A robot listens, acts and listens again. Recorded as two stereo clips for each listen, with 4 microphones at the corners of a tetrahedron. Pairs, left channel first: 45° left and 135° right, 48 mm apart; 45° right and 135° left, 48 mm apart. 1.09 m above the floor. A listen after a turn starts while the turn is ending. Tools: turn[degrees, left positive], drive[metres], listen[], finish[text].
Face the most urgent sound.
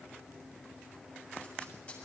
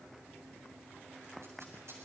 Action: listen[]
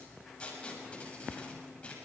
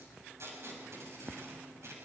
Action: listen[]
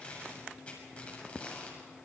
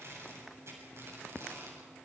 Action: finish[I can't make out anything urgent, only tape being pulled.]